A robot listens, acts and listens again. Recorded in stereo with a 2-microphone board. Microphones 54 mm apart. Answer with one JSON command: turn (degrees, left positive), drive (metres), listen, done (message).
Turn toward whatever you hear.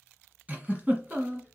{"turn": -30}
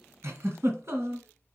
{"turn": -120}
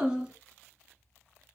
{"turn": -20}
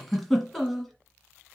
{"done": "Found it: a giggle, straight ahead."}